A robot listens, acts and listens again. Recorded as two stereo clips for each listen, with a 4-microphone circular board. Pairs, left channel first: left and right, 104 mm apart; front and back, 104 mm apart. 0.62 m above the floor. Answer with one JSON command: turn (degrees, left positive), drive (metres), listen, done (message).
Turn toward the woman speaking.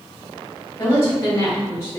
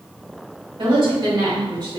{"turn": 140}
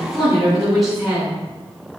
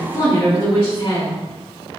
{"done": "Facing the woman speaking, 2 to 4 m away."}